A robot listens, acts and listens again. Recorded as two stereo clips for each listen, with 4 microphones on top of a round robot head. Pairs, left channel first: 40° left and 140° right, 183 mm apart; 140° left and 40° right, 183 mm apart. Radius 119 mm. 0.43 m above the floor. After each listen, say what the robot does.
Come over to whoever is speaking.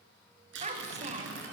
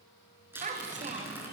Turn 90° right.
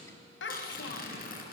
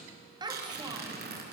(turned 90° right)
Turn 30° left.
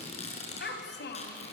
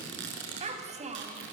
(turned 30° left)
Turn 15° left.
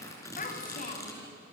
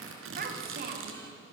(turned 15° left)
Drive 1.0 m forward.
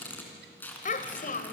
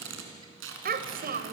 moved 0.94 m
Drive 1.0 m forward.
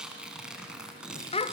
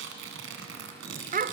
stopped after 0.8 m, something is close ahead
Turn 10° right.
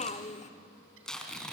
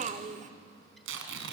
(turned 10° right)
Arrived at the child speaking, straight ahead.